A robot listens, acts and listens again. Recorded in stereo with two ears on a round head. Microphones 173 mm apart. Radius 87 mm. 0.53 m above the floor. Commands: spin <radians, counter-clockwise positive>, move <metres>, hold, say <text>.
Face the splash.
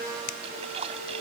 spin -0.52
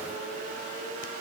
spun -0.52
hold
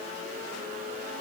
say I heard a splash, but can't make it out now. It was about straight ahead or 120° right.